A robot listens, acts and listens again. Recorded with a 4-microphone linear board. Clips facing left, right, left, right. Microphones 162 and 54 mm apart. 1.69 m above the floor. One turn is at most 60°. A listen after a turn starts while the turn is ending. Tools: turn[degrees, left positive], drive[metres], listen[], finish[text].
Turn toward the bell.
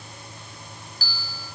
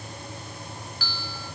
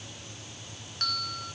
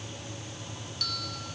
Thought: The bell: about 40° left or 140° left.
Action: turn[40]
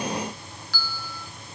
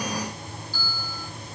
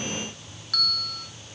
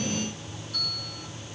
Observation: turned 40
Thought: So it is at 100° left.
Action: turn[60]
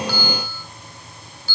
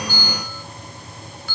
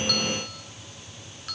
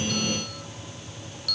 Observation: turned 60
Thought: The bell is now 30° left.
Action: turn[30]
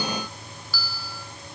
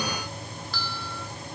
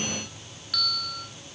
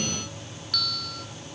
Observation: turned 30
Action: finish[Facing the bell.]